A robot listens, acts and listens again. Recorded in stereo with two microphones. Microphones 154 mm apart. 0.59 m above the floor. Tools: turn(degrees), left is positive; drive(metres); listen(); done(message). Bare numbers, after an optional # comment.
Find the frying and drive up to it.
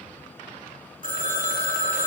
listen()
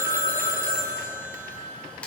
turn(30)
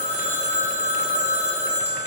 listen()
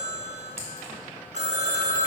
listen()
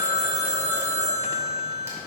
done("I heard frying, but can't make it out now. It was about 20° right or 140° left. I did not reach it.")